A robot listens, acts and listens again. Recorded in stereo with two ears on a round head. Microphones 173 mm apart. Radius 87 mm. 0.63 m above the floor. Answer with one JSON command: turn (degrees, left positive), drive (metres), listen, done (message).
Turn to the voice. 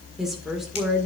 {"turn": 30}
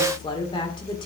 {"turn": 150}
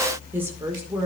{"turn": -15}
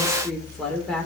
{"done": "Found it: a woman speaking, straight ahead."}